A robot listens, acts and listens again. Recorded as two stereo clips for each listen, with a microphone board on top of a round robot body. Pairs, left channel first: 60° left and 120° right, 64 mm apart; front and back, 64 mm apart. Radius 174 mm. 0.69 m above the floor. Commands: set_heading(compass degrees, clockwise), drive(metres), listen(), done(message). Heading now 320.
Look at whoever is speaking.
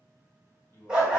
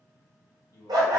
done("Facing the man speaking.")